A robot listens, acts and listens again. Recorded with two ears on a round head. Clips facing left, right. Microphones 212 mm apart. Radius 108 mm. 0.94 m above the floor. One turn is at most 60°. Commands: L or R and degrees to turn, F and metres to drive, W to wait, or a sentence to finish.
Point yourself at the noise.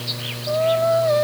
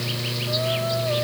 L60
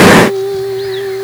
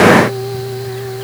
L45
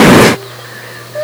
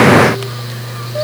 W
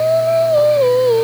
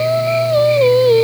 R25
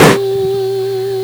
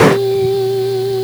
Found it: singing, straight ahead.